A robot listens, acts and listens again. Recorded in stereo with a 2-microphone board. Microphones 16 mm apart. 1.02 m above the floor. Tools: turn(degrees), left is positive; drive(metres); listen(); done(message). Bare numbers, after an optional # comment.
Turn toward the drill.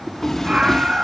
listen()
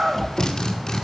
# The drill: about 50° left or 130° left.
turn(50)
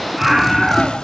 listen()
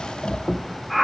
listen()
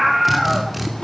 done("Facing the drill.")